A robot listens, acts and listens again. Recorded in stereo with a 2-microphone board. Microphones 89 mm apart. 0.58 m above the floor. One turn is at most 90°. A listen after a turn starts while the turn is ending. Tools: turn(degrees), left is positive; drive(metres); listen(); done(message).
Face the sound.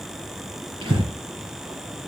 turn(degrees=-90)
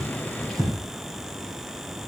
done("Found it: breathing, straight ahead.")